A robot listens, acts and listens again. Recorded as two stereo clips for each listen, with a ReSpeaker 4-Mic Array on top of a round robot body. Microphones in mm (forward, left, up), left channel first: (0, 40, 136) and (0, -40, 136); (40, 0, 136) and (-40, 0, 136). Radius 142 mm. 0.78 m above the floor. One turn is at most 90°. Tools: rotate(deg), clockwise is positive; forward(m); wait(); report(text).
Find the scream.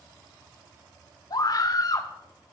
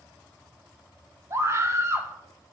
rotate(-90)
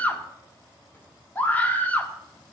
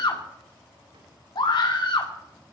rotate(-20)
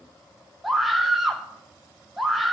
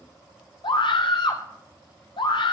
report("Found it: a scream, straight ahead, 2 to 4 m away.")